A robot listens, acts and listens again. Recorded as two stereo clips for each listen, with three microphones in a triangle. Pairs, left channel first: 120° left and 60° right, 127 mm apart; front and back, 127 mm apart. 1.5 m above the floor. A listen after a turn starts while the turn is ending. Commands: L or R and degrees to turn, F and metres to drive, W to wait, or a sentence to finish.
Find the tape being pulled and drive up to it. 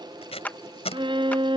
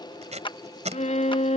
L155
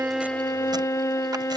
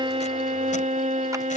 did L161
W
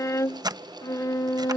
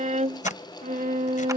W
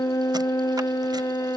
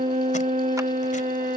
Facing where the tape being pulled came from. I can't hear it now. I did not reach it.